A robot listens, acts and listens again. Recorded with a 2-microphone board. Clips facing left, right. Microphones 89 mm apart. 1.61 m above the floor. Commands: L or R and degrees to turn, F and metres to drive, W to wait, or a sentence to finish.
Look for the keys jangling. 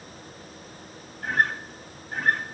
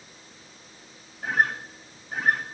W
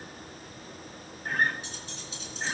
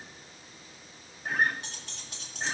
R90
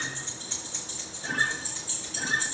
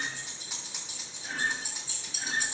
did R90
R15
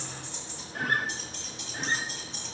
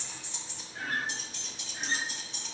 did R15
Facing the keys jangling.